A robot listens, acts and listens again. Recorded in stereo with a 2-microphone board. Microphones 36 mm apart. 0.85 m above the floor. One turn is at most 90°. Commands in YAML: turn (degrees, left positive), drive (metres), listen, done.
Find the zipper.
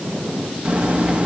turn: -30
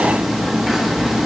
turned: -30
turn: -10
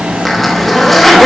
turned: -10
done: "Found it: a zipper, straight ahead."